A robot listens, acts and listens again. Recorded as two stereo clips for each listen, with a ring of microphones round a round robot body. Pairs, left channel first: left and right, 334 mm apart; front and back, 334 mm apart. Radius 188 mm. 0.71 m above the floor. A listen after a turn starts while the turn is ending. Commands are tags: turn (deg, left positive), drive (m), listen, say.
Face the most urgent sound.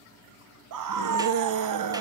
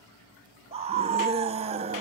<turn deg="-110"/>
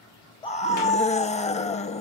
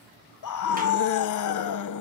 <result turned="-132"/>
<turn deg="20"/>
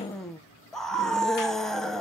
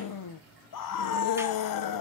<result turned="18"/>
<say>Facing the scream.</say>